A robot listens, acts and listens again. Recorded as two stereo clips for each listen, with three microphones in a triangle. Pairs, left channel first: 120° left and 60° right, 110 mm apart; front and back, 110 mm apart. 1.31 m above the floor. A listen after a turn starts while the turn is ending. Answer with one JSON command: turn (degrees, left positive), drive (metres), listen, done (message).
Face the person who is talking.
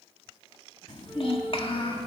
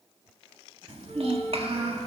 {"turn": 155}
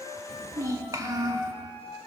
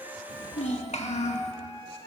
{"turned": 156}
{"done": "Found it: a child speaking, straight ahead."}